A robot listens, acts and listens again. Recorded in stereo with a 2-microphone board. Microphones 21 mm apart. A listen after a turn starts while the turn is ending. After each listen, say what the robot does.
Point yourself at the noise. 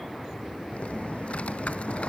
Turn 70° left.
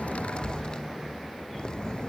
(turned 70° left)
Turn 40° left.
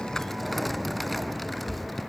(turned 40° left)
Facing the typing on a keyboard.